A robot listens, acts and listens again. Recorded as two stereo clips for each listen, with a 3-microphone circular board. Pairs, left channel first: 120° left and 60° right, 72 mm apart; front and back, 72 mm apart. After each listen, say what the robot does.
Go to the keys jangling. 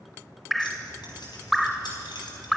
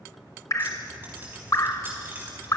Turn 115° left.
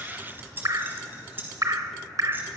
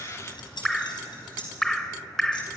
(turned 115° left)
Drive 1.0 m forward.
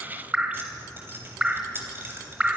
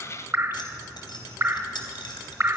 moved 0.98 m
Drive 1.0 m forward.
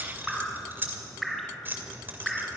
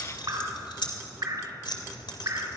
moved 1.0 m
Drive 1.0 m forward.
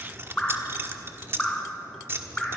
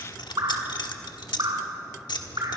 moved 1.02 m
Drive 1.0 m forward.
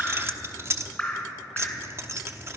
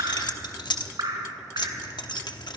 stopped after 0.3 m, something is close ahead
Turn 10° right.
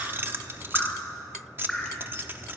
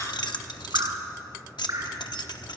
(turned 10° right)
Arrived at the keys jangling, straight ahead.